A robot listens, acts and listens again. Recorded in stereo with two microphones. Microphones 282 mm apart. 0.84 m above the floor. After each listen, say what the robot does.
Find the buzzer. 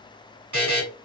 Turn 90° right.
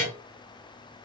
Found it: a buzzer, straight ahead.